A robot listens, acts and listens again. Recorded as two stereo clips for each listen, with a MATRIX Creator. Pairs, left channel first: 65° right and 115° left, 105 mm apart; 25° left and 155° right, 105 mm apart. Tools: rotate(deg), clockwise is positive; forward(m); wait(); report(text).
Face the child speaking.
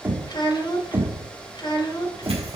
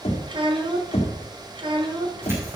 rotate(115)
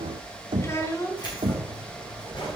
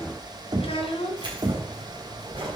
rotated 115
report("Found it: a child speaking, straight ahead, 1 to 2 m away.")